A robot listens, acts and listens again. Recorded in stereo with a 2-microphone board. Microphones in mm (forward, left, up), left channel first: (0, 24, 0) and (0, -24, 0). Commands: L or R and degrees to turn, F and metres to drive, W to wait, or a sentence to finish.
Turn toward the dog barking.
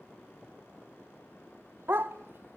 R55
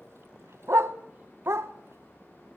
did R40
R85
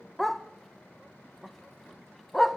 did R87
Facing the dog barking, under 1 m away.